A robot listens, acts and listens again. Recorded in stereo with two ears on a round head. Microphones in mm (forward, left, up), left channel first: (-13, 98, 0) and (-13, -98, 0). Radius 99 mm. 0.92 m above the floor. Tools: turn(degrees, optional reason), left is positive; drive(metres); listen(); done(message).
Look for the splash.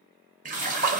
turn(degrees=-40, reason="The splash: about 40° right or 140° right.")
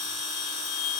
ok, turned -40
listen()
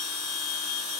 done("I heard a splash, but can't make it out now. It was about straight ahead or 100° right.")